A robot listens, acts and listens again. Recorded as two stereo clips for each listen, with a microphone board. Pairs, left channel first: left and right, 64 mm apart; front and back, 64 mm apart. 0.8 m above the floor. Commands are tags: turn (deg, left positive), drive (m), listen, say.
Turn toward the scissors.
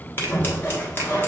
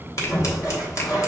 <turn deg="35"/>
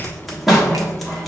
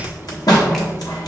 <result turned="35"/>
<say>Found it: scissors, straight ahead, 1 to 2 m away.</say>